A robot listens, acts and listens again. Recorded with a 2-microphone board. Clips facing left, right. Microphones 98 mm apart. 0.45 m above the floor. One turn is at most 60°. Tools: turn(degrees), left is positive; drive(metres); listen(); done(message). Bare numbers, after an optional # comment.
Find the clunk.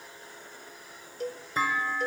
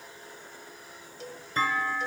turn(30)
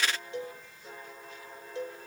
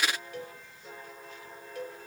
listen()
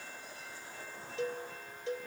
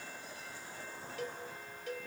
done("I heard a clunk, but can't make it out now. It was about 25° right or 145° left.")